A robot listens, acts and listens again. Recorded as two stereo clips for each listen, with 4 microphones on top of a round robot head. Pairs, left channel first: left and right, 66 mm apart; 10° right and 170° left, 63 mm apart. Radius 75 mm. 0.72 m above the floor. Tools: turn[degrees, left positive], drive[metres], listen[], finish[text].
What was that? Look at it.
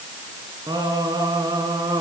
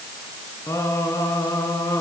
Thought: The singing: 55° right.
Action: turn[-55]
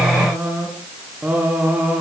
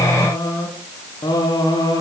Thought: The singing is now 20° right.
Action: turn[-20]
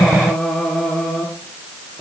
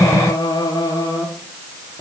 Thought: The singing is now 10° left.
Action: turn[10]
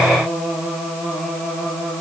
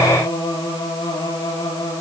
Action: finish[Found it: singing, straight ahead, over 4 m away.]